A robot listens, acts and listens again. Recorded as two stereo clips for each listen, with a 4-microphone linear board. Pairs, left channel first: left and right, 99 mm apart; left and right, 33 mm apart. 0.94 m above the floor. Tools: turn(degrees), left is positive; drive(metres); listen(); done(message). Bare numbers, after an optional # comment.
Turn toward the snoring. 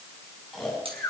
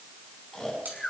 turn(30)
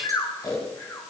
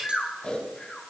# So it is at 145° left.
turn(145)
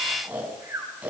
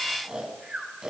# The snoring is now 15° right.
turn(-15)
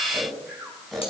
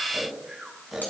done("Found it: snoring, straight ahead, over 4 m away.")